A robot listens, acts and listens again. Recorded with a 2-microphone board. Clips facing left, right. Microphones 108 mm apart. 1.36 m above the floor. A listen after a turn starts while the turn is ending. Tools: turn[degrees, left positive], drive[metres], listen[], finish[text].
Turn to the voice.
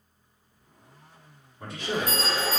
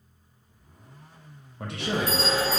Thought: The man speaking: about 75° right or 105° right.
Action: turn[-75]
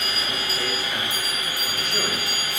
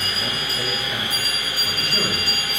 Action: listen[]
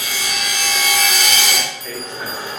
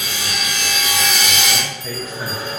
Action: finish[Found it: a man speaking, straight ahead.]